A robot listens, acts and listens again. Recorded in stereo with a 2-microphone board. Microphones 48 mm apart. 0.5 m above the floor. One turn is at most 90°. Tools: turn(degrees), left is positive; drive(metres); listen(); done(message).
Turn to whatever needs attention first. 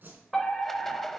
turn(degrees=30)
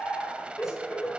turn(degrees=90)
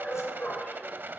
turn(degrees=35)
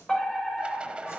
turn(degrees=10)
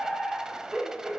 done("Found it: a fire alarm, straight ahead, 2 to 4 m away.")